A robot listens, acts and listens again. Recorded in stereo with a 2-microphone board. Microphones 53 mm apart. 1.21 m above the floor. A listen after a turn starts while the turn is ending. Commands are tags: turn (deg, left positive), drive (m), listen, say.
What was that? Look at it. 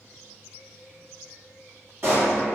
<turn deg="-55"/>
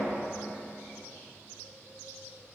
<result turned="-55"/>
<listen/>
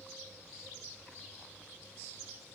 <say>I heard a pop, but can't make it out now. It was about straight ahead or 70° right.</say>